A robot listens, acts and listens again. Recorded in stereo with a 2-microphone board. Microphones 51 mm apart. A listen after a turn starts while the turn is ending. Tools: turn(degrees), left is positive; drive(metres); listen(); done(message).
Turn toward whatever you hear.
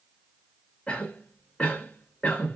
turn(degrees=20)
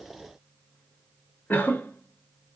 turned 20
turn(degrees=140)
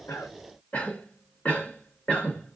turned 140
turn(degrees=45)
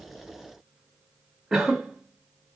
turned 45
done("Facing the cough, 1 to 2 m away.")